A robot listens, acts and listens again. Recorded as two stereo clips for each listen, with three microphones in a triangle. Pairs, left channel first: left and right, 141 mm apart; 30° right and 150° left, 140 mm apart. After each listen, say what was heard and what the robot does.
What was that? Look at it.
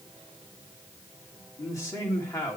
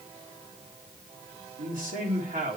The man speaking: 160° left. Turn 160° left.
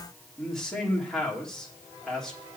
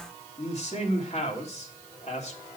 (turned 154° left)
Found it: a man speaking, straight ahead, 2 to 4 m away.